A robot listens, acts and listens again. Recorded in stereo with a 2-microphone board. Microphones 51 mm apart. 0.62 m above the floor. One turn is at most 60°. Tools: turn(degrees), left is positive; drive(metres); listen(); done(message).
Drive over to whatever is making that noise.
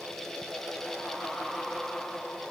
listen()
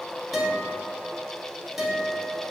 turn(degrees=-30)
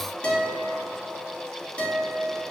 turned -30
turn(degrees=25)
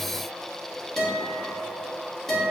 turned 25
turn(degrees=10)
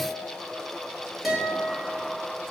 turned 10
drive(metres=1.0)
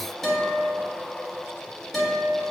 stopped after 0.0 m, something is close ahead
done("Blocked. The guitar is further on, straight ahead.")